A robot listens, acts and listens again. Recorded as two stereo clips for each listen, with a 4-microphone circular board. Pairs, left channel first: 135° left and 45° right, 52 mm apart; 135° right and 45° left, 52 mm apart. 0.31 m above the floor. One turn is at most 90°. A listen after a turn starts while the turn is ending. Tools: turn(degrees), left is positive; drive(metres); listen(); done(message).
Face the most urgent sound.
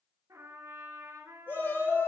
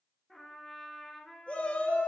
turn(degrees=90)
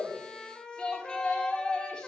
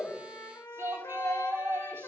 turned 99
turn(degrees=65)
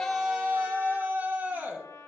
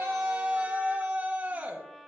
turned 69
done("Found it: a shout, straight ahead.")